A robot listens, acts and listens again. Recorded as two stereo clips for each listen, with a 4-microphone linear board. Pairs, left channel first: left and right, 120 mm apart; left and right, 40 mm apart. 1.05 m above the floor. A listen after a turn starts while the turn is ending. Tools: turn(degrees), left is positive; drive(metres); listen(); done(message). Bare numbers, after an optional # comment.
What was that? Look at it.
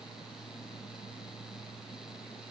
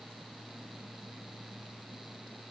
listen()
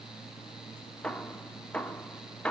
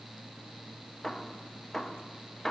turn(30)
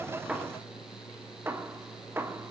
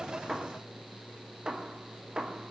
# So it is at 20° right.
turn(-20)
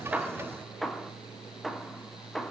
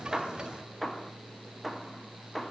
done("Found it: hammering, straight ahead, 2 to 4 m away.")